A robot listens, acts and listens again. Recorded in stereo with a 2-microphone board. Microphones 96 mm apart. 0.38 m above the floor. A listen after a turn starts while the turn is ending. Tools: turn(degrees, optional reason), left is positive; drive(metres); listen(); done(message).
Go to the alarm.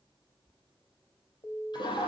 turn(degrees=45, reason="The alarm: about 45° left or 135° left.")
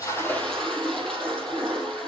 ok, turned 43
listen()
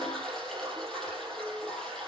listen()
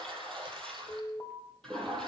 turn(degrees=80, reason="So it is at 80° left.")
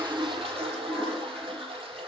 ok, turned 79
listen()
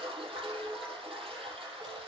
listen()
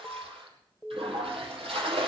drive(metres=1.0)
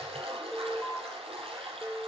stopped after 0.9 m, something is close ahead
done("Arrived at the alarm, straight ahead.")